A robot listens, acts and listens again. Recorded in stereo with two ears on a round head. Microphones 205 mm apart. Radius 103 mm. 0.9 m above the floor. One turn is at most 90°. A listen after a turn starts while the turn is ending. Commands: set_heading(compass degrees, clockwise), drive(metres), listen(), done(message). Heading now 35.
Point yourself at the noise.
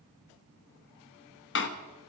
set_heading(340)
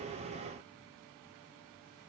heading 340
listen()
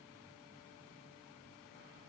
done("I heard a door slam, but can't make it out now. It was about straight ahead or 70° left.")